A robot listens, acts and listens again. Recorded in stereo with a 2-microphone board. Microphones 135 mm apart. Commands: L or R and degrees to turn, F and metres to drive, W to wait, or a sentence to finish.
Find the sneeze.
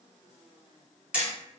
W
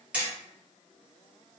W
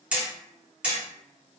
I can't make out a sneeze, only hammering.